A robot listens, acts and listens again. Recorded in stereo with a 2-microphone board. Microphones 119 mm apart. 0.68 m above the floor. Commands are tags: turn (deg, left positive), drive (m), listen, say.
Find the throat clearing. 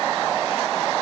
<listen/>
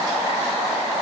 <listen/>
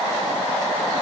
<say>I can't make out throat clearing to turn to.</say>